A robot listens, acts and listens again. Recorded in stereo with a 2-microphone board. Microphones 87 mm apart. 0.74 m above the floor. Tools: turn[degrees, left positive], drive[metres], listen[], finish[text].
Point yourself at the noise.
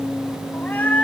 Thought: The cat meowing: about 20° left or 160° left.
Action: turn[20]
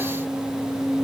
Action: listen[]
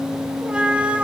Thought: So it is at 15° right.
Action: turn[-15]
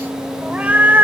Thought: The cat meowing is now 20° right.
Action: turn[-20]
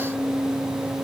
Action: listen[]
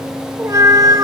Thought: The cat meowing is now 45° right.
Action: turn[-45]
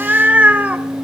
Thought: The cat meowing is now 15° right.
Action: turn[-15]
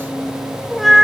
Action: finish[Facing the cat meowing, 1 to 2 m away.]